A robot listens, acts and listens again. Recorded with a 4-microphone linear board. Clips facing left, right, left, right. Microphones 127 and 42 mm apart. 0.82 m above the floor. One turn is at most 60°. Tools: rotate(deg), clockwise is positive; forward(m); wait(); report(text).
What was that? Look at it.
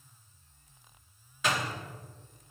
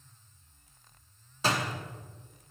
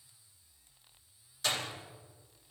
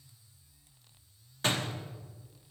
rotate(35)
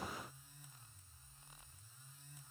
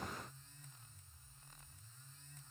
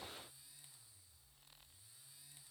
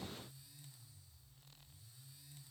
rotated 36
wait()
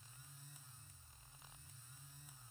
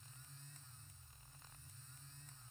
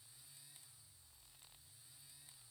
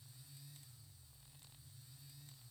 report("I heard a door slam, but can't make it out now. It was about 5° left or 110° right.")